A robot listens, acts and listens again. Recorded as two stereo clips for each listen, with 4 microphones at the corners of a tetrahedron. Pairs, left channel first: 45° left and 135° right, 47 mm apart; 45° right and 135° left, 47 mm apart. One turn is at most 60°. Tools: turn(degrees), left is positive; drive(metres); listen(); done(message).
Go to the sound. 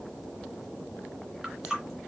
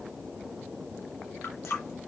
turn(degrees=-60)
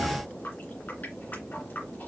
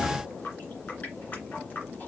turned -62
drive(metres=1.0)
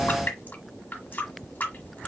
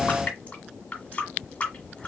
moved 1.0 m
turn(degrees=10)
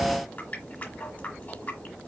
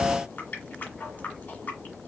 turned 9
drive(metres=1.0)
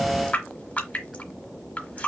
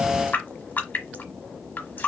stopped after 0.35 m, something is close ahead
done("Arrived at the running tap, straight ahead.")